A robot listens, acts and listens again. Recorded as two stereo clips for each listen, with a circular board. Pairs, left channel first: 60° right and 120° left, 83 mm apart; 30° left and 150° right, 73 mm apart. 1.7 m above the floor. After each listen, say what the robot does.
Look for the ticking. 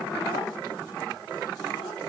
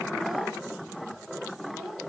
Keep listening.
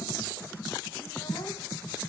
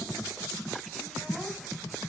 Keep listening.
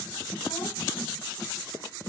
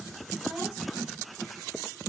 I can't make out ticking.